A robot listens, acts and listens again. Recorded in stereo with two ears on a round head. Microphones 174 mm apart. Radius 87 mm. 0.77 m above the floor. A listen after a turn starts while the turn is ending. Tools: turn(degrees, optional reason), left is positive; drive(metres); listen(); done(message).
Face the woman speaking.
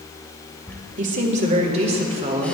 turn(degrees=-25, reason="The woman speaking: about 25° right or 155° right.")
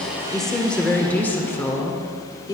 turn(degrees=20, reason="So it is at 20° left.")
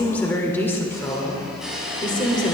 turn(degrees=25, reason="The woman speaking is now 25° left.")
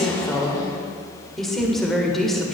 done("Found it: a woman speaking, straight ahead, 2 to 4 m away.")